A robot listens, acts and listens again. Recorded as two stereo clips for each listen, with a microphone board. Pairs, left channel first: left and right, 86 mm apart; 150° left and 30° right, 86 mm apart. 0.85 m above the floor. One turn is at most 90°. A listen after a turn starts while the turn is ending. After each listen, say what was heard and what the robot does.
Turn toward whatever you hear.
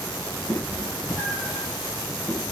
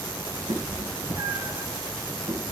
Found it: a cat meowing, straight ahead.